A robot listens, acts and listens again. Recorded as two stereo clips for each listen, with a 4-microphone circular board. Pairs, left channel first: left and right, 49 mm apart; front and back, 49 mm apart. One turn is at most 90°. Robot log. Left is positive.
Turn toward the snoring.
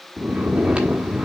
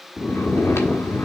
note: The snoring: 25° right.
cmd yaw -25
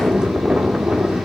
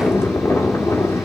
note: The snoring is now 20° right.
cmd yaw -20
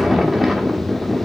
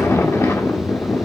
end: Facing the snoring.